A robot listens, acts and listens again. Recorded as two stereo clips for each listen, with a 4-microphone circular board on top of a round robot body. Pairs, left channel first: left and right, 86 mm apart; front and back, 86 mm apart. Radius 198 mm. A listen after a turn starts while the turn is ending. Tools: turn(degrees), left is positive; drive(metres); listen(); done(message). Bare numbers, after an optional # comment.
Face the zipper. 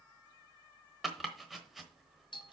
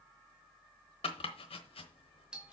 listen()
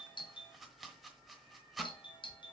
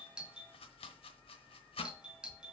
listen()
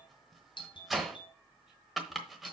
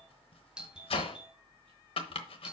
done("I can't make out a zipper, only a doorbell and chopping.")